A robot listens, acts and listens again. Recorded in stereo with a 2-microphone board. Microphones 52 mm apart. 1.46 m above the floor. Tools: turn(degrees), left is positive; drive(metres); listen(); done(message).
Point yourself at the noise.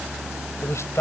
turn(degrees=60)
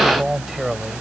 done("Found it: a man speaking, straight ahead.")